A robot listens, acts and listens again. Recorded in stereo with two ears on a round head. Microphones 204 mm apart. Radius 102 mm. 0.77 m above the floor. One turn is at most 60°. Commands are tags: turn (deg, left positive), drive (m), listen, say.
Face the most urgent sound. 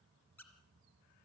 <listen/>
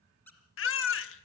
<turn deg="60"/>
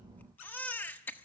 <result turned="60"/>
<turn deg="10"/>
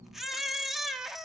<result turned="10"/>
<say>Facing the baby crying.</say>